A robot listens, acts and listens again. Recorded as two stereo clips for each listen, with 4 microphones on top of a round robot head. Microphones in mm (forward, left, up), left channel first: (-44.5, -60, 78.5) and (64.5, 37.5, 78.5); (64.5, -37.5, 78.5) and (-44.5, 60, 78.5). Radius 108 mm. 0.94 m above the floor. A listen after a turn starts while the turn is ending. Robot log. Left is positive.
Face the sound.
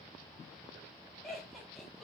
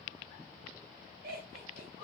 note: The laughter: 130° left.
cmd yaw +130
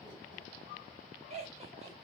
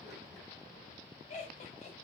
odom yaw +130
end: Facing the laughter, 2 to 4 m away.